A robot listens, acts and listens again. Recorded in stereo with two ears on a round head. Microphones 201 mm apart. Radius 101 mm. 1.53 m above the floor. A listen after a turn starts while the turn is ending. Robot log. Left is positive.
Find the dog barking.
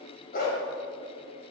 note: The dog barking: about 45° left or 135° left.
cmd yaw +45
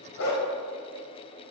note: So it is at 85° left.
cmd yaw +85
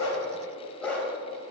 end: Found it: a dog barking, straight ahead, 2 to 4 m away.